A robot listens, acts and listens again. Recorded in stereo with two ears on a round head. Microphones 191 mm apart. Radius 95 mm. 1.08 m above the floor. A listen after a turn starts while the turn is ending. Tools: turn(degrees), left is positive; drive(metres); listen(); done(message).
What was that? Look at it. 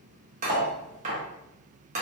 turn(degrees=-35)
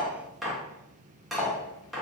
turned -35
done("Found it: cutlery clinking, straight ahead.")